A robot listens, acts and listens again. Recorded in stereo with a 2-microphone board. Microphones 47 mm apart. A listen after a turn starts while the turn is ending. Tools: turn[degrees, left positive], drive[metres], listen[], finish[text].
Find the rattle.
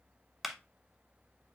Action: listen[]
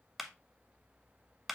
Action: listen[]
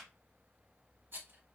Thought: The rattle: about 50° right or 130° right.
Action: turn[-50]
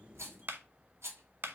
Thought: So it is at 80° right.
Action: turn[-80]
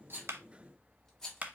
Thought: The rattle is now 15° left.
Action: turn[15]
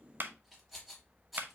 Action: finish[Found it: a rattle, straight ahead, 2 to 4 m away.]